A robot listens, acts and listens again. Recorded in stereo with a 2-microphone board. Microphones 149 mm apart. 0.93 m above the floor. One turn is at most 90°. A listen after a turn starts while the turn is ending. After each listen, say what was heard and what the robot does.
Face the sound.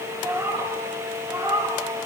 The cat meowing: about 40° right or 140° right. Turn 40° right.
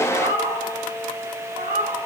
So it is at 105° right. Turn 90° right.
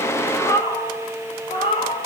The cat meowing is now 45° left. Turn 45° left.
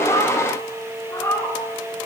The cat meowing is now 20° left. Turn 20° left.
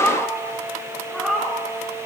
Facing the cat meowing.